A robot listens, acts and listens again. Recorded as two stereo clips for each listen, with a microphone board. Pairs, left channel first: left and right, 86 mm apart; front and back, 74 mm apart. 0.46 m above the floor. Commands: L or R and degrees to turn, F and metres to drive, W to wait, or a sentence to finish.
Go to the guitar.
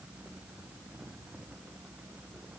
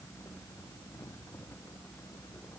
W
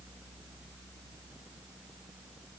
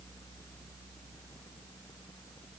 W
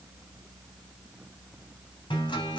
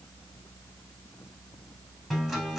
L90
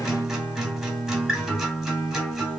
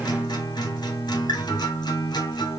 F1.0
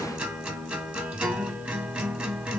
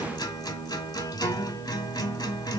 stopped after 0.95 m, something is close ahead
R15
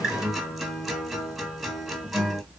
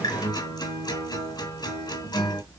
Arrived at the guitar, straight ahead.